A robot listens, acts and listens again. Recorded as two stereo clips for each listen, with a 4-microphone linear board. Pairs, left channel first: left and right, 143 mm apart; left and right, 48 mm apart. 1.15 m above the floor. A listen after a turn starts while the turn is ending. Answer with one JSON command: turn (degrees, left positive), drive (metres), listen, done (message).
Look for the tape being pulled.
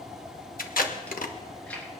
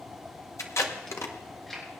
{"turn": 90}
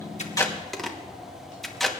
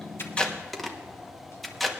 {"done": "Facing the tape being pulled, 1 to 2 m away."}